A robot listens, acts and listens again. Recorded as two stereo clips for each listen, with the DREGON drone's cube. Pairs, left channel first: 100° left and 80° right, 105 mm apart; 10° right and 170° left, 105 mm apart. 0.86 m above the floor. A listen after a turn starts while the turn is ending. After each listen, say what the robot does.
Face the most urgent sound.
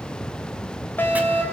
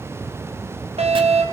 Turn 170° left.
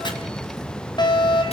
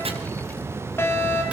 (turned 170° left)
Turn 55° left.
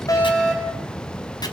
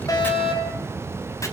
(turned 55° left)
Turn 15° left.
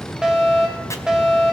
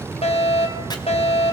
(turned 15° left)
Found it: a fire alarm, straight ahead.